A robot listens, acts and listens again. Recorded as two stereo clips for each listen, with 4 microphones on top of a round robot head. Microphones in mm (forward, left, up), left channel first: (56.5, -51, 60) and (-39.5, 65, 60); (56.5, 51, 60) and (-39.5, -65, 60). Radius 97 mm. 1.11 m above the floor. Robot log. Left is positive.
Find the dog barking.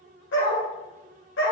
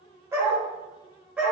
note: The dog barking: 45° right.
cmd yaw -45
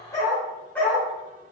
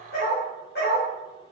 note: The dog barking is now 35° left.
cmd yaw +35
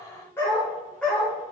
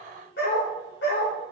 note: The dog barking is now 40° left.
cmd yaw +40
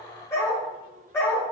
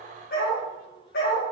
note: The dog barking is now 25° left.
cmd yaw +25
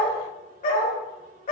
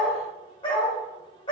note: The dog barking is now 10° right.
cmd yaw -10
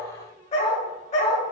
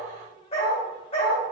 end: Facing the dog barking, 1 to 2 m away.